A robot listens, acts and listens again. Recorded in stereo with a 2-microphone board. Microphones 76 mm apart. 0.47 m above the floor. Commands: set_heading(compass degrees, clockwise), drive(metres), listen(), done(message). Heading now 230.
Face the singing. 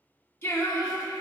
set_heading(195)
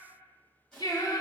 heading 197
set_heading(82)
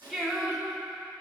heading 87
done("Found it: singing, straight ahead, under 1 m away.")